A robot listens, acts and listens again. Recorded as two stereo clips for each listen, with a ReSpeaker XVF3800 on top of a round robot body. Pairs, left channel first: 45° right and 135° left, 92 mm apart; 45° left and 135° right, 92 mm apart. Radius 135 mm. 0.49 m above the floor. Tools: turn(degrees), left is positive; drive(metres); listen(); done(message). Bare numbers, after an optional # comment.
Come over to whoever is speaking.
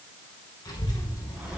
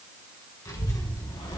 drive(1.0)
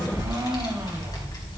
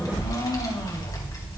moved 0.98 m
drive(1.0)
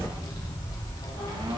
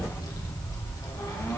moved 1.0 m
drive(1.0)
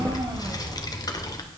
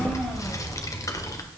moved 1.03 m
drive(1.0)
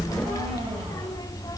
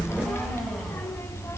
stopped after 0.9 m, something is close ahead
# The child speaking is now 10° right.
turn(-10)
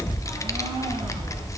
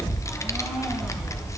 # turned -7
done("Arrived at the child speaking, straight ahead.")